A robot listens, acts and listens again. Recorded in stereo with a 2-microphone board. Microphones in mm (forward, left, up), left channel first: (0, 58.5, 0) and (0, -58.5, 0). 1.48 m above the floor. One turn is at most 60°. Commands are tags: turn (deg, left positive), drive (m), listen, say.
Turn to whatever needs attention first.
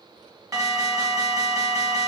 <turn deg="-30"/>
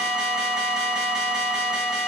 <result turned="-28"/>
<say>Found it: an alarm, straight ahead, 2 to 4 m away.</say>